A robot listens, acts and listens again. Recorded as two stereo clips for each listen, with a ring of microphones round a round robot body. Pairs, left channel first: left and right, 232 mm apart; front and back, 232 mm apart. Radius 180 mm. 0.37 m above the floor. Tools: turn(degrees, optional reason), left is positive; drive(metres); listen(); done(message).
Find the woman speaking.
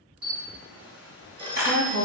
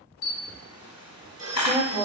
turn(degrees=-110, reason="The woman speaking: 110° right.")
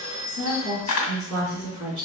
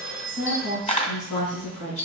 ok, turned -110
turn(degrees=-20, reason="The woman speaking is now 20° right.")
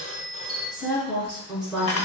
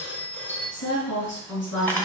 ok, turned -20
done("Found it: a woman speaking, straight ahead, over 4 m away.")